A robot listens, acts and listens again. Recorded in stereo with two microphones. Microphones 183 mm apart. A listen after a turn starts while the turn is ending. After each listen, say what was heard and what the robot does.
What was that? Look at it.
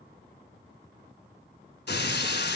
The breaking glass: about 65° left or 115° left. Turn 65° left.
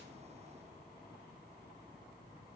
Keep listening.
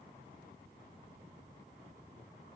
I heard breaking glass, but can't make it out now. It was about straight ahead or 50° left.